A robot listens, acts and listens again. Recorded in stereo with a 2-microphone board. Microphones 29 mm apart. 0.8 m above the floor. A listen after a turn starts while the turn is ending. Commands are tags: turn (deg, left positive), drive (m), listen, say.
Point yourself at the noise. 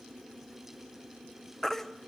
<turn deg="30"/>
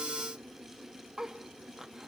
<turn deg="-15"/>
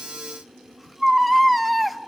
<say>Found it: a baby crying, straight ahead, under 1 m away.</say>